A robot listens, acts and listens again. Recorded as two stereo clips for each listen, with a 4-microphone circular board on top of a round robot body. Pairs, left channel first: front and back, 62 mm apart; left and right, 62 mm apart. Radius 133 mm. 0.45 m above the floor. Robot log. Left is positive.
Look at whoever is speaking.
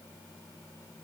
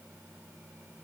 cmd idle
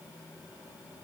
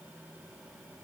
cmd idle
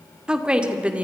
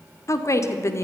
note: The woman speaking: 115° left.
cmd yaw +115
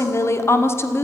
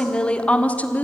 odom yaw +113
note: The woman speaking is now 35° left.
cmd yaw +35
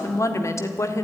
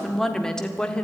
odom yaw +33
note: The woman speaking is now 20° left.
cmd yaw +20
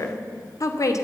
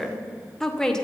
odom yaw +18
note: The woman speaking is now 10° left.
cmd yaw +10
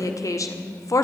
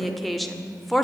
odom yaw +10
end: Found it: a woman speaking, straight ahead, 2 to 4 m away.